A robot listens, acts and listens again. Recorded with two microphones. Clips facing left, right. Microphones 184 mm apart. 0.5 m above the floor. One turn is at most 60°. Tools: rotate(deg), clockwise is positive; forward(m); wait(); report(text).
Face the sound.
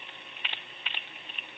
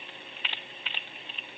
wait()
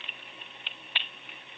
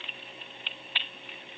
wait()
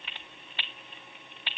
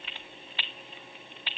report("I can't make out anything to turn to.")